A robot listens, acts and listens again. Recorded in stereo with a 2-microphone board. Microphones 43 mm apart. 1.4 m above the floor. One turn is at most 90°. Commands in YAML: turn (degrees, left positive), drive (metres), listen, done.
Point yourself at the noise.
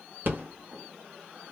turn: -55
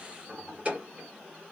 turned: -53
turn: -40
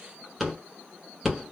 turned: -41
done: "Found it: a rattle, straight ahead, 1 to 2 m away."